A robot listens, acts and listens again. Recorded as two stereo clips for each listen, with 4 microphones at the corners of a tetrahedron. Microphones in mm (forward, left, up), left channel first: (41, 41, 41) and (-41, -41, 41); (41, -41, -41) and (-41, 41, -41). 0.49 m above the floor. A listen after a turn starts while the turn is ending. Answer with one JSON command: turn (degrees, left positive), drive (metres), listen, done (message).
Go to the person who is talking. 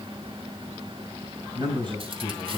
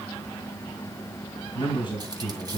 {"turn": -90}
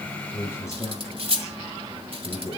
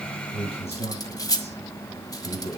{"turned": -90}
{"turn": -20}
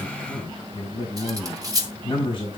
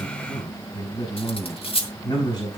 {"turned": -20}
{"drive": 1.0}
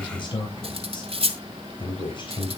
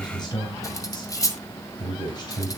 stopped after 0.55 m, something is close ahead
{"done": "Something is in my way. I am facing the man speaking but have not reached it."}